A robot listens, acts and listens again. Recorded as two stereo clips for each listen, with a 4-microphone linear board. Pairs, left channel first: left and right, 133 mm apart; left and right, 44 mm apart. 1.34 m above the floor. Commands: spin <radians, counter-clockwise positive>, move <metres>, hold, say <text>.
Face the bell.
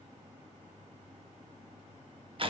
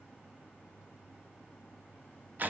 hold
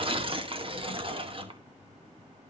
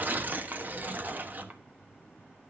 hold
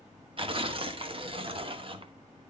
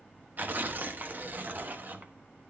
say I can't make out a bell to turn to.